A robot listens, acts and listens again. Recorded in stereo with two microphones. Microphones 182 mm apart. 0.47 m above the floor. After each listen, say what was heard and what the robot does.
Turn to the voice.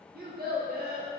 The child speaking: about 60° right or 120° right. Turn 60° right.
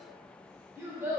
So it is at 15° right. Turn 15° right.
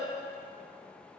Found it: a child speaking, straight ahead, under 1 m away.